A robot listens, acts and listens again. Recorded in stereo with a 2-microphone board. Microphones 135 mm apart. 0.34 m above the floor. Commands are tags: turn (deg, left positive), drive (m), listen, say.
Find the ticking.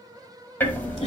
<turn deg="30"/>
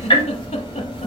<turn deg="135"/>
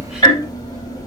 <turn deg="35"/>
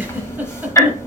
<turn deg="25"/>
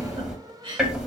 <say>Facing the ticking, 1 to 2 m away.</say>